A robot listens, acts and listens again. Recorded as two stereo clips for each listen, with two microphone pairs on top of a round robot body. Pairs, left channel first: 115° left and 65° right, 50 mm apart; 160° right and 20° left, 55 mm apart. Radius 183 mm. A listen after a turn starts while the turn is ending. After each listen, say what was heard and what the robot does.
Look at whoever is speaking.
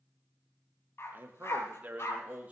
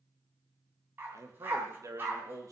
Found it: a man speaking, straight ahead, 2 to 4 m away.